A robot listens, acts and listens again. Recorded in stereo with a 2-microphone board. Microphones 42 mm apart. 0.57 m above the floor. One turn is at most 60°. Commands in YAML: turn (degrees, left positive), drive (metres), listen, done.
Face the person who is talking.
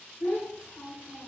turn: 60
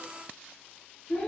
turn: 40
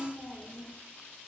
done: "Facing the child speaking."